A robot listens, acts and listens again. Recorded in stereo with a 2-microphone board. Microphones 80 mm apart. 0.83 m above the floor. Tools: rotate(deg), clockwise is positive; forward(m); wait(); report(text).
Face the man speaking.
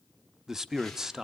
rotate(30)
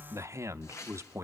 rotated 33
rotate(140)
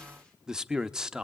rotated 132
rotate(10)
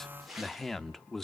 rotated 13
report("Facing the man speaking, under 1 m away.")